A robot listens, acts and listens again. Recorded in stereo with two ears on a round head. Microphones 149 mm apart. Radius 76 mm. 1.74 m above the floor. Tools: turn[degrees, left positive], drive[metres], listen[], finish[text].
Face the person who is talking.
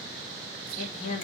Thought: The woman speaking: about 40° left or 140° left.
Action: turn[40]
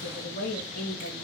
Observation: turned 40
Thought: So it is at 115° left.
Action: turn[115]
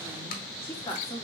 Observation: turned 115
Thought: The woman speaking is now 20° left.
Action: turn[20]
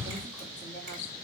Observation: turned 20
Action: listen[]
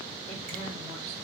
Action: listen[]
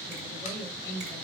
Thought: The woman speaking is now 15° left.
Action: turn[15]
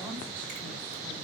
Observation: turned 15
Action: listen[]
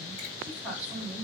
Action: finish[Facing the woman speaking.]